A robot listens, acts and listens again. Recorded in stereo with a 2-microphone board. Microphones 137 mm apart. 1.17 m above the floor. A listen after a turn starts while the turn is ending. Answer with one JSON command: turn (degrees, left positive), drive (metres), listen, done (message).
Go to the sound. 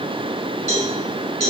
{"turn": -60}
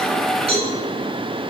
{"turn": -50}
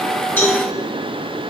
{"turn": 25}
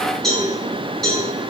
{"drive": 1.0}
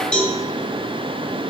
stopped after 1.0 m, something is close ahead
{"turn": 10}
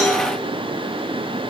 {"listen": true}
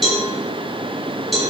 {"done": "Arrived at the cowbell, straight ahead."}